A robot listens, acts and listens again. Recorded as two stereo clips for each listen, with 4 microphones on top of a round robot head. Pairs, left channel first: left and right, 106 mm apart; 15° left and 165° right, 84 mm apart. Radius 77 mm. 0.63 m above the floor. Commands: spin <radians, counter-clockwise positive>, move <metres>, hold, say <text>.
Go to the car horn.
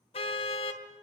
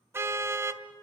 spin 2.36
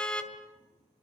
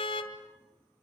spin 0.17
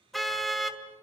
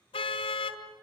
move 1.0
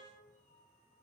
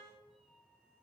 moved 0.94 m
hold
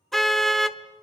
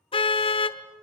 move 1.0
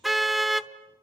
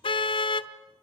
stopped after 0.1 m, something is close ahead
say Arrived at the car horn, straight ahead.